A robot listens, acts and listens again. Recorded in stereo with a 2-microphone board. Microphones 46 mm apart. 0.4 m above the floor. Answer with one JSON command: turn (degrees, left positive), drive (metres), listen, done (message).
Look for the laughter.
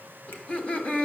{"turn": 25}
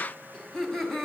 {"turn": 10}
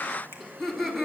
{"done": "Found it: laughter, straight ahead, 2 to 4 m away."}